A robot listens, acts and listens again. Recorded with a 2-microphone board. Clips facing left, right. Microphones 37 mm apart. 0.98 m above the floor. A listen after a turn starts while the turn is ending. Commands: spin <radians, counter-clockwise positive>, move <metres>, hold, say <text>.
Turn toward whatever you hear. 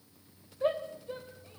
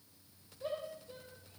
spin 0.87
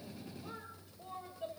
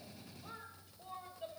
say Facing the shout, 2 to 4 m away.